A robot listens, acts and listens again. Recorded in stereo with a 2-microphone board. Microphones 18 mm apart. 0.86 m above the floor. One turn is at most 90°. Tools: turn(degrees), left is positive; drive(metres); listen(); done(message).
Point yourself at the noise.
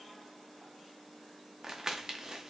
turn(degrees=-30)
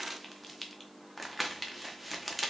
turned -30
done("Facing the crumpling, under 1 m away.")